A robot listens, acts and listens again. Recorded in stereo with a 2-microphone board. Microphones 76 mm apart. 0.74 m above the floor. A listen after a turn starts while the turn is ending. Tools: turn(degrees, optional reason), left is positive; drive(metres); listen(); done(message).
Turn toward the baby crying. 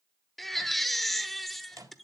turn(degrees=30)
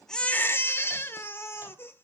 turn(degrees=150, reason="So it is at 150° left.")
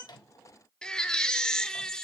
turn(degrees=10, reason="The baby crying is now 10° left.")
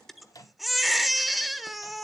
done("Facing the baby crying.")